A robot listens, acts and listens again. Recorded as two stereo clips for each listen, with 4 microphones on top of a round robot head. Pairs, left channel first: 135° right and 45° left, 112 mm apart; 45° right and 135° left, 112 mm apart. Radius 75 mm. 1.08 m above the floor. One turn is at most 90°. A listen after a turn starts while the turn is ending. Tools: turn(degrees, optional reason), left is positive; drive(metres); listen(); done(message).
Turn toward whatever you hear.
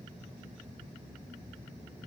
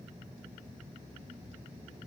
listen()
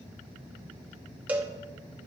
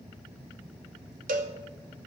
turn(degrees=90, reason="The cowbell: 125° left.")
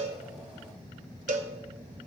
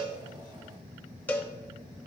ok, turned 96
turn(degrees=30, reason="The cowbell is now 30° left.")
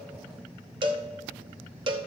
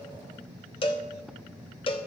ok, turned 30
done("Facing the cowbell.")